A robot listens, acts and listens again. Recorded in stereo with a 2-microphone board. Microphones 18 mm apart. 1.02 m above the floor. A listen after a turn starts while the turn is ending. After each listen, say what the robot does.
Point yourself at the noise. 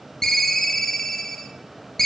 Turn 20° left.
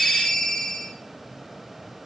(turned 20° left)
Turn 140° left.
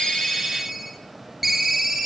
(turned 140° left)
Turn 15° right.
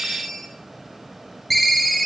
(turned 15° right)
Facing the ringtone, under 1 m away.